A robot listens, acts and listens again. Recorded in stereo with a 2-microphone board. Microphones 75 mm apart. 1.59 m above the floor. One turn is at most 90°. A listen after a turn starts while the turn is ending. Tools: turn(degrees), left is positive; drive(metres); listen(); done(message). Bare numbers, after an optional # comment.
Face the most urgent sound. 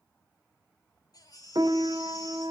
# The baby crying: about 60° left or 120° left.
turn(60)
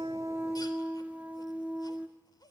listen()
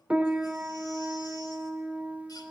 listen()
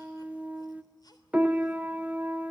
done("I heard a baby crying, but can't make it out now. It was about straight ahead or 60° left.")